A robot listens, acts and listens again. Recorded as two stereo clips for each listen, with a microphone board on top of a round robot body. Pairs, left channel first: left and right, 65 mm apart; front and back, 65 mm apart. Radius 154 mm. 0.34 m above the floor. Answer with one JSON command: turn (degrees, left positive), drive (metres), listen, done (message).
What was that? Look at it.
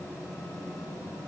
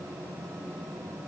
{"listen": true}
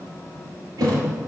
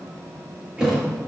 {"turn": -105}
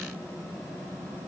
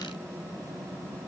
{"done": "Facing where the thud came from. I can't hear it now."}